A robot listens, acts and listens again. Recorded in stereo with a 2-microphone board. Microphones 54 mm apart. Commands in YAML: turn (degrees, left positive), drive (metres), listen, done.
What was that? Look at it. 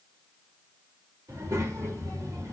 turn: -70
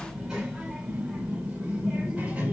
turn: -20
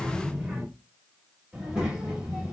turn: -10
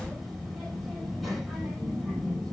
done: "Facing the child speaking."